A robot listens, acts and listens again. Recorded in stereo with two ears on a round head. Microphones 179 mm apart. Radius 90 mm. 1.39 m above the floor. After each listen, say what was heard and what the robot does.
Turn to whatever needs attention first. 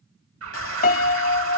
Turn 90° right.
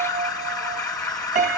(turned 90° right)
So it is at 10° left. Turn 10° left.
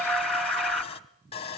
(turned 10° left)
Found it: an alarm, straight ahead.